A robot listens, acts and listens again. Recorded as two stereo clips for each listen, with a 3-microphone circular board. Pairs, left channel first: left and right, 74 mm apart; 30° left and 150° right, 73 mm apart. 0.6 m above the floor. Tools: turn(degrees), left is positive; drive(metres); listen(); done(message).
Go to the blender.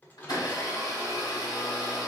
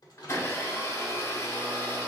turn(degrees=75)
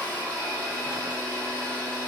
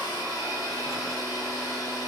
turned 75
turn(degrees=25)
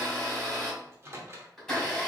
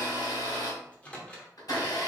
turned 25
turn(degrees=10)
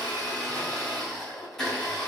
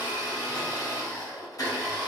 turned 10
drive(metres=1.0)
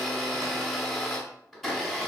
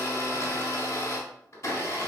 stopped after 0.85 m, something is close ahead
done("Arrived at the blender, straight ahead.")